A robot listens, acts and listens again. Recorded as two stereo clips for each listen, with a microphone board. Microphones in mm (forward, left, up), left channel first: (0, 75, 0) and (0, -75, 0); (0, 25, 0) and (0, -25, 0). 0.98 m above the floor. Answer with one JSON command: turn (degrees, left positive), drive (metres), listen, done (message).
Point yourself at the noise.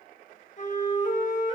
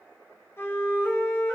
{"turn": 55}
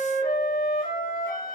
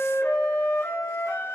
{"turn": 70}
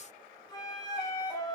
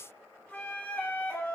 {"turn": 30}
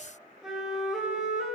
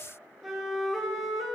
{"done": "Facing the flute, 2 to 4 m away."}